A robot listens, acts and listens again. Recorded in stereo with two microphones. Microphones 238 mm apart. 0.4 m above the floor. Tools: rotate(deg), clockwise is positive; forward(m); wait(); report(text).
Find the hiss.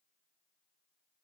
wait()
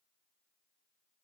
wait()
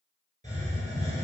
rotate(30)
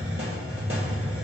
rotate(120)
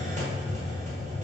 rotate(30)
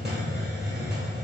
report("Found it: a hiss, straight ahead, 1 to 2 m away.")